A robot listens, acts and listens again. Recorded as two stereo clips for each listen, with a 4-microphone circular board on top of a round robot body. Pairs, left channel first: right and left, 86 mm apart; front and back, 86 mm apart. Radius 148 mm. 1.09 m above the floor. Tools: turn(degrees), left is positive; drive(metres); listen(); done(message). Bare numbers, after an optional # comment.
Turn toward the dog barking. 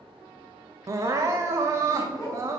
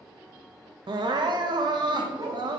# The dog barking: 145° right.
turn(-145)
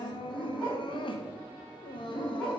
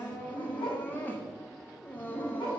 # The dog barking is now 10° right.
turn(-10)
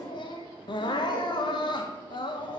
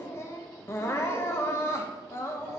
done("Found it: a dog barking, straight ahead, over 4 m away.")